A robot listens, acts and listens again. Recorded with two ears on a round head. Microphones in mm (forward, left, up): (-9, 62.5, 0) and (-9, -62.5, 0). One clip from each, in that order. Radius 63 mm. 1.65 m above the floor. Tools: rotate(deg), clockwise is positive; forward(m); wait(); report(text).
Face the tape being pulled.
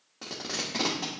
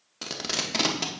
rotate(70)
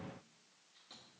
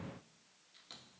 wait()
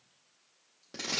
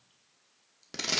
rotate(40)
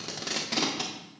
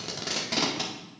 report("Facing the tape being pulled.")